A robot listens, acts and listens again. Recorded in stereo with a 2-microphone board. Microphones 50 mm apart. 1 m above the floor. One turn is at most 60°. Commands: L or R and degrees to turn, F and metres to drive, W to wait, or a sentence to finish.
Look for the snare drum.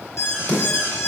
L45
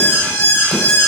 W
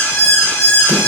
W
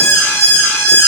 I heard a snare drum, but can't make it out now. It was about straight ahead or 90° left.